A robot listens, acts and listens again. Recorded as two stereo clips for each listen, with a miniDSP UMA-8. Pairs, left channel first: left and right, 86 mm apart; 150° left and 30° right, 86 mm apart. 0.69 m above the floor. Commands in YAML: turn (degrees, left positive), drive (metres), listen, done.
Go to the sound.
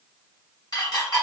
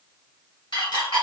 turn: 130
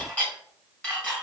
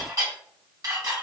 turn: 15
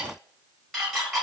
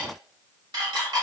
drive: 1.0
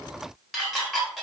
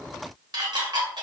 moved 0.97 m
drive: 1.0
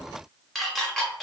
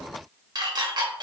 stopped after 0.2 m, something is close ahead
done: "I am next to the dishes clattering."